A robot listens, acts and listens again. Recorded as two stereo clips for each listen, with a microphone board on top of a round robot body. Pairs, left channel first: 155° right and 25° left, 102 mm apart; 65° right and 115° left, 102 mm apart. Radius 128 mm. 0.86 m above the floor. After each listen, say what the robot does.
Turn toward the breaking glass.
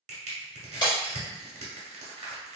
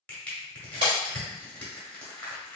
Turn 160° left.
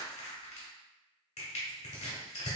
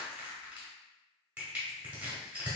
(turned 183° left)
Turn 25° right.
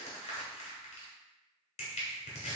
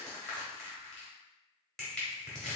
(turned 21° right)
I heard breaking glass from this way, but can't make it out now.